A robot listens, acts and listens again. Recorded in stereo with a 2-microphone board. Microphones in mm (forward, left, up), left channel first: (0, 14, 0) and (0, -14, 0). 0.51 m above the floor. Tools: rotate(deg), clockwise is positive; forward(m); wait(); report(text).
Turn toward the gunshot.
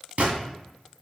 rotate(65)
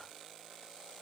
wait()
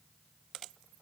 report("I heard a gunshot, but can't make it out now. It was about straight ahead or 50° right.")